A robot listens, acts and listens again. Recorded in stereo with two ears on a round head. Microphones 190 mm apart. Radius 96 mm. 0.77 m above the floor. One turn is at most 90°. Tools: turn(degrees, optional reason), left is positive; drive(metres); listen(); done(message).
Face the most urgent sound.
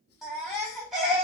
turn(degrees=-30)
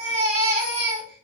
turn(degrees=-90, reason="So it is at 145° right.")
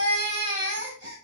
turn(degrees=-55, reason="The baby crying is now 55° right.")
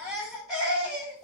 done("Found it: a baby crying, straight ahead, 1 to 2 m away.")